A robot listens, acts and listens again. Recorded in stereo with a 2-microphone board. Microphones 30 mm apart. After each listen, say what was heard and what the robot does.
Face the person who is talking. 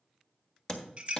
Keep listening.
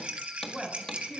Turn 30° left.
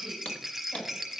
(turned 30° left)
Keep listening.
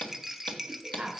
So it is at 30° right. Turn 30° right.
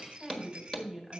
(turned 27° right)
Found it: a woman speaking, straight ahead.